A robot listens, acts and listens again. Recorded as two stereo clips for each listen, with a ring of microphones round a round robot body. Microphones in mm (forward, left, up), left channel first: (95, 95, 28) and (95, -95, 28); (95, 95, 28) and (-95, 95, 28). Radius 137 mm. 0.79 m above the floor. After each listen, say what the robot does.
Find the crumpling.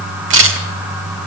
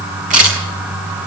Keep listening.
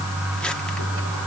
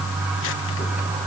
Keep listening.
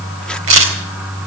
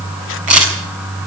I can't make out crumpling to turn to.